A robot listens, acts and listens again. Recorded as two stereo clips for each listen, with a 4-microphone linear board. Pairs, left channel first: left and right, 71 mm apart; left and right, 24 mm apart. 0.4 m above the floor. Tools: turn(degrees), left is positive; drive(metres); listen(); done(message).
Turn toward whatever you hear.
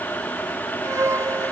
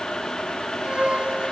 turn(degrees=-40)
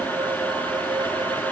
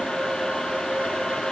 listen()
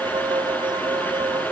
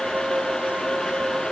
turn(degrees=-100)
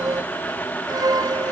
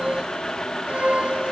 turn(degrees=-55)
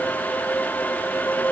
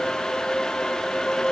turn(degrees=20)
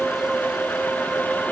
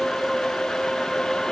done("Found it: a violin, straight ahead.")